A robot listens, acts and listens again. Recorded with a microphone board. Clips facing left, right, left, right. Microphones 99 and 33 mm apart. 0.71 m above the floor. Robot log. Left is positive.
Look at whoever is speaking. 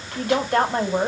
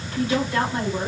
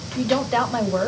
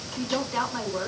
note: The woman speaking: about 65° left or 115° left.
cmd yaw +65
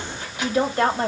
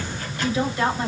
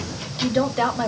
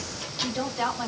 note: So it is at 50° left.
cmd yaw +50
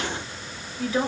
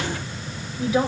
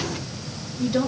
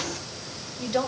note: The woman speaking is now 15° right.
cmd yaw -15
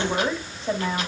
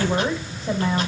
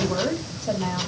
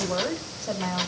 end: Facing the woman speaking, 2 to 4 m away.